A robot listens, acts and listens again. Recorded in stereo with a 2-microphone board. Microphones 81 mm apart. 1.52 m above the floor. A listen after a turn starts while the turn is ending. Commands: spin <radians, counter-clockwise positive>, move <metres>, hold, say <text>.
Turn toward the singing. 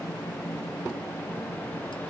hold
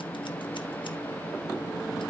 hold
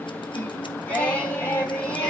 spin 0.35
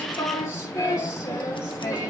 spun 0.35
spin 2.44
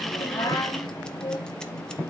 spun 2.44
spin 1.13
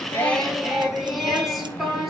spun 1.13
say Found it: singing, straight ahead.